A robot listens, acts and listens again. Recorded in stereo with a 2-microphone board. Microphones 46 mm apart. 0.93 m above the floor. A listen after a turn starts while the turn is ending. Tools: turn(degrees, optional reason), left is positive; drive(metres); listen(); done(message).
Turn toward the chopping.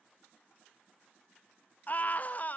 listen()
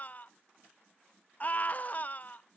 listen()
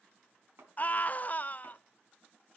turn(degrees=-70, reason="The chopping: about 70° right or 110° right.")
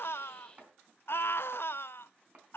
turn(degrees=-40, reason="So it is at 40° right.")
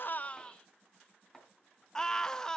turn(degrees=15, reason="The chopping is now 15° left.")
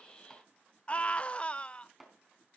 done("Found it: chopping, straight ahead.")